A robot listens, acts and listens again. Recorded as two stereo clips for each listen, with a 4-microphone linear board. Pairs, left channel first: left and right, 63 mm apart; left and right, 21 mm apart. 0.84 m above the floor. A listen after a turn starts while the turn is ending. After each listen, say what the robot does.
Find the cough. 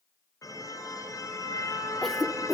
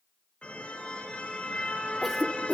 Turn 30° left.
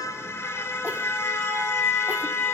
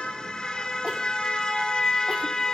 Keep listening.
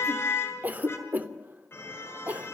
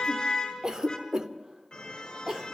Turn 30° right.
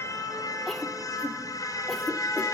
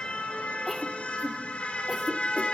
Found it: a cough, straight ahead.